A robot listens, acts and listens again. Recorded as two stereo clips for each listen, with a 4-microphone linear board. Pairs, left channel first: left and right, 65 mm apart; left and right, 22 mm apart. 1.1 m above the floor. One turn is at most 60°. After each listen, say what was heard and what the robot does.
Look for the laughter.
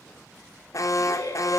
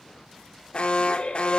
The laughter: about 70° left or 110° left. Turn 60° left.
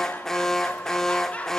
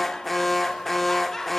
So it is at 20° left. Turn 20° left.
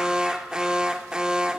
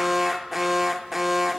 Keep listening.
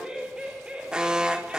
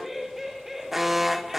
The laughter is now 15° right. Turn 15° right.
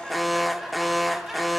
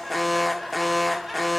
Facing the laughter.